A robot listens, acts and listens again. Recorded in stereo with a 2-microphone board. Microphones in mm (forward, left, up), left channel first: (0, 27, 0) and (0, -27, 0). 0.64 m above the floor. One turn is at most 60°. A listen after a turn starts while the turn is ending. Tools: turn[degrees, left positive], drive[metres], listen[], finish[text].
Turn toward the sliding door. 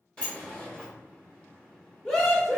Thought: The sliding door: about 15° left or 165° left.
Action: turn[15]
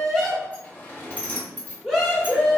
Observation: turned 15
Thought: So it is at 150° left.
Action: turn[60]
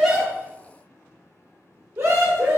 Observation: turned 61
Thought: Nothing new. It was at 90° left.
Action: turn[60]
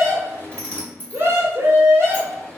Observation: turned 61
Thought: The sliding door is now 25° left.
Action: turn[25]
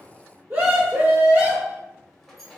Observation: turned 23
Action: listen[]
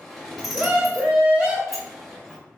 Action: finish[Found it: a sliding door, straight ahead.]